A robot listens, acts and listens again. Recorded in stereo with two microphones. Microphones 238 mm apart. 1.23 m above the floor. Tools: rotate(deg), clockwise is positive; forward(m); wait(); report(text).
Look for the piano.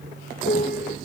rotate(-40)
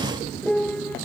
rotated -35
report("Facing the piano.")